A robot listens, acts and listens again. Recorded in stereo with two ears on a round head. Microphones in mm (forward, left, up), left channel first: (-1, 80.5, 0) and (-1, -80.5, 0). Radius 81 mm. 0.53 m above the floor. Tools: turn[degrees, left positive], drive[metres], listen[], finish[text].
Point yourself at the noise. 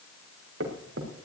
Action: turn[-90]
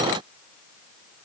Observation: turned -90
Action: finish[Facing where the thud came from. I can't hear it now.]